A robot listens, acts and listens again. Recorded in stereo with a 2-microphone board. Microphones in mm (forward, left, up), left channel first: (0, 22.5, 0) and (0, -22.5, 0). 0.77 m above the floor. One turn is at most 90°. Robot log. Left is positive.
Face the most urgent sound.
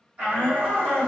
note: The shout: about 30° right or 150° right.
cmd yaw -30
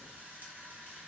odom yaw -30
cmd idle
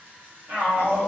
note: So it is at 115° right.
cmd yaw -90
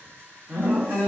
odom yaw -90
note: The shout is now 30° right.
cmd yaw -30
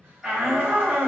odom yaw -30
end: Facing the shout, 2 to 4 m away.